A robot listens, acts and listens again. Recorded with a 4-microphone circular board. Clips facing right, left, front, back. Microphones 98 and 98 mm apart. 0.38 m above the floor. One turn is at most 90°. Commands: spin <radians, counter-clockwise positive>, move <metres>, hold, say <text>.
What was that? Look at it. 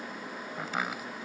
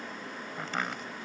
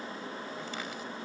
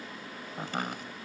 spin -1.57
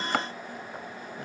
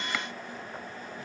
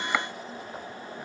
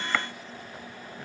spin -1.31
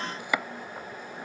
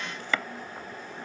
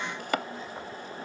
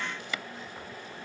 spin -0.26
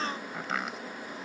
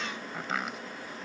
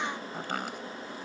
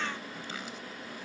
say Facing the chopping.